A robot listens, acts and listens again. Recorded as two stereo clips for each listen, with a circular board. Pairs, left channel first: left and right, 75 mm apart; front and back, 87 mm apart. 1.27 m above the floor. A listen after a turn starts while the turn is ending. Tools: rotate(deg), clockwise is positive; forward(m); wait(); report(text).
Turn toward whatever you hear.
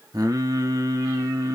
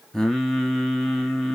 rotate(85)
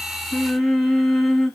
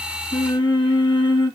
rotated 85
report("Found it: singing, straight ahead.")